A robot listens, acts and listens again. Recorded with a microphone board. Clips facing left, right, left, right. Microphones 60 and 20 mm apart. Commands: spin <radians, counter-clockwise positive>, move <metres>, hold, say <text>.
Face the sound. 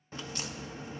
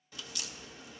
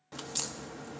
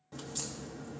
spin 0.61
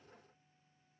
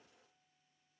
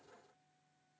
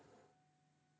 hold
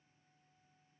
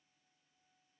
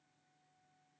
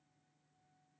say I heard a crack, but can't make it out now. It was about straight ahead or 110° left.